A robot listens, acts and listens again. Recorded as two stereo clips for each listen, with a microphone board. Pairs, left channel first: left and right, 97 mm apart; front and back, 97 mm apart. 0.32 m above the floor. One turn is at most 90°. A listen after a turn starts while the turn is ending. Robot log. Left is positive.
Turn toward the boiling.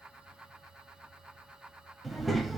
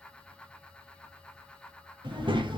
cmd idle
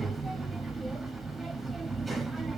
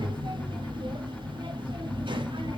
cmd idle
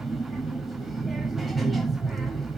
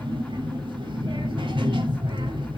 end: I can't make out boiling, only a child speaking.